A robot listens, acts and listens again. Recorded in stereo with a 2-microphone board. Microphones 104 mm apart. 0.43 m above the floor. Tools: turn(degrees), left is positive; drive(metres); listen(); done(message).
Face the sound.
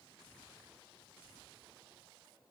listen()
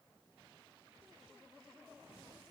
listen()
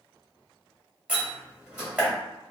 turn(degrees=-30)
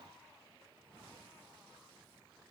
listen()
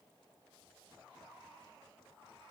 done("I heard a door slam, but can't make it out now. It was about 15° left or 135° right.")